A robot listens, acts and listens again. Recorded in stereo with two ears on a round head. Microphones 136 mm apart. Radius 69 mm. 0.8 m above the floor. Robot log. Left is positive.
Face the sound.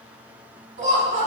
note: The laughter: about 35° right or 145° right.
cmd yaw -35
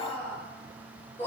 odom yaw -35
note: So it is at 20° left.
cmd yaw +20
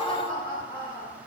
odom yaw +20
note: The laughter is now 10° left.
cmd yaw +10
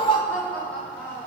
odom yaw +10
note: The laughter is now 10° left.
cmd yaw +10
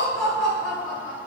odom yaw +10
end: Facing the laughter.